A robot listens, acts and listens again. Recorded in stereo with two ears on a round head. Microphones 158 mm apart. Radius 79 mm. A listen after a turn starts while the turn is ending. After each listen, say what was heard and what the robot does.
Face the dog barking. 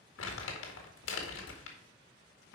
Keep listening.
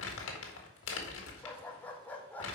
Turn 30° left.
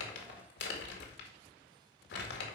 Keep listening.
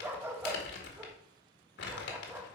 So it is at 15° right. Turn 15° right.
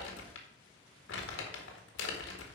Keep listening.
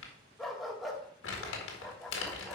Found it: a dog barking, straight ahead, 1 to 2 m away.